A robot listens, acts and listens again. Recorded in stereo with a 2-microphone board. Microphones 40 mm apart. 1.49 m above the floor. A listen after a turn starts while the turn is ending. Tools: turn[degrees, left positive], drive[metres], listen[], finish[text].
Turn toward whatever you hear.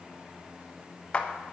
Thought: The clap: about 30° left or 150° left.
Action: turn[30]
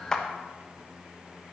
Action: listen[]
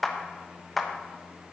Action: finish[Found it: a clap, straight ahead.]